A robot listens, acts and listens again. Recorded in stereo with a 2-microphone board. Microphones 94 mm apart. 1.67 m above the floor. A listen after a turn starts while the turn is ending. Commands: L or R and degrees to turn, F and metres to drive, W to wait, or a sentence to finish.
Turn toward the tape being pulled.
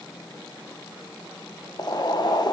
W
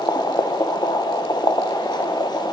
W
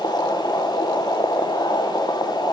I can't make out tape being pulled to turn to.